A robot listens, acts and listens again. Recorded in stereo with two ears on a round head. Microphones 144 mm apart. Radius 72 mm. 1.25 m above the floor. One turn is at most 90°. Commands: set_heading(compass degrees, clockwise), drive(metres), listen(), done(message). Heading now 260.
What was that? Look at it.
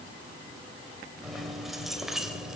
set_heading(290)
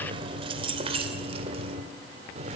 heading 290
set_heading(20)
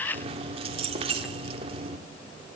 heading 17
set_heading(52)
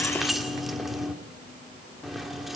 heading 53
done("Found it: keys jangling, straight ahead, 1 to 2 m away.")